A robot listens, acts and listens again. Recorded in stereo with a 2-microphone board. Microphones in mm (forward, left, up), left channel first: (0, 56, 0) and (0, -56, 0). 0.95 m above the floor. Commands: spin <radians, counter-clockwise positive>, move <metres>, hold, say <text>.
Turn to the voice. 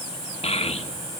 spin 1.22
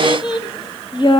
spin 0.79
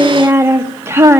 spin -0.44
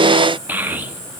spin -0.26
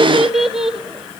say Found it: a child speaking, straight ahead, 1 to 2 m away.